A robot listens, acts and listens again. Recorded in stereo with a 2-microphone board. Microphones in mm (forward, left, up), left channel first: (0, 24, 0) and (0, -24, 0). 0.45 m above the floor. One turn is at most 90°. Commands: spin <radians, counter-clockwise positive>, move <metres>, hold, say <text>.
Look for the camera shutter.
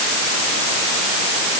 hold
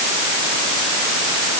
hold
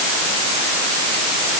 say I can't make out a camera shutter to turn to.